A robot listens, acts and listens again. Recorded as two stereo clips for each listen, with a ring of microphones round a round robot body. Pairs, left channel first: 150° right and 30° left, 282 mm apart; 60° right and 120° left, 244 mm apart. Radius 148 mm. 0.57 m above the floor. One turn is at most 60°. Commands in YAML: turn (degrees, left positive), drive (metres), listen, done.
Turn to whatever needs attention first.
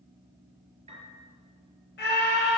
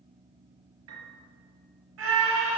turn: 60
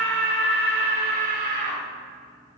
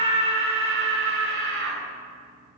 turn: 60
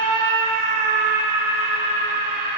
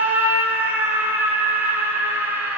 turn: 40
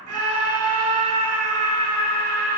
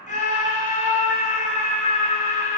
done: "Found it: a scream, straight ahead, 2 to 4 m away."